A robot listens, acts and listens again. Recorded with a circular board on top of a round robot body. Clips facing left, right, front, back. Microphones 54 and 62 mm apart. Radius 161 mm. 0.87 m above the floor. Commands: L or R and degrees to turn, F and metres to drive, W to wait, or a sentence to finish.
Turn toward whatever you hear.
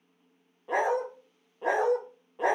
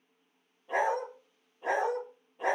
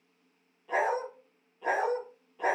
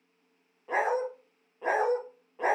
L120
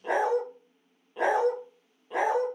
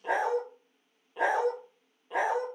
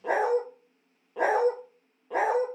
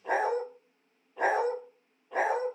Found it: a dog barking, straight ahead, 1 to 2 m away.